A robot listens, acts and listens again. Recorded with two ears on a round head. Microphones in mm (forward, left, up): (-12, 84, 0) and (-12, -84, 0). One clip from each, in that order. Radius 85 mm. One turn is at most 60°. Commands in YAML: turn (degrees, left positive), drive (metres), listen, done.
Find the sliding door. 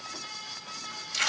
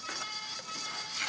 listen: true
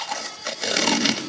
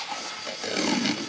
listen: true
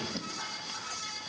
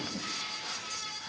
done: "I can't make out a sliding door, only tape being pulled."